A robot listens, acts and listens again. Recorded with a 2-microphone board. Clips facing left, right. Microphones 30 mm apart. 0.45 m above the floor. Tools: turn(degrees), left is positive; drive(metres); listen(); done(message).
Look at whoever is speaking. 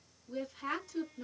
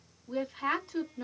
turn(degrees=-45)
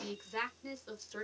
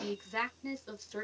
turn(degrees=-10)
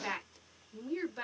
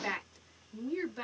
done("Found it: a woman speaking, straight ahead, 1 to 2 m away.")